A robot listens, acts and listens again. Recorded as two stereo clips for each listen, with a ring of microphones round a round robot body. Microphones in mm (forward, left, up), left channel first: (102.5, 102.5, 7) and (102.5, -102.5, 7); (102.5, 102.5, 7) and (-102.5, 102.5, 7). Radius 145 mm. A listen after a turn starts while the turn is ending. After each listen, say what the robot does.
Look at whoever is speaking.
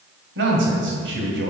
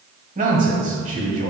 Turn 120° right.
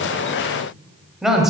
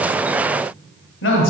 Found it: a man speaking, straight ahead, 1 to 2 m away.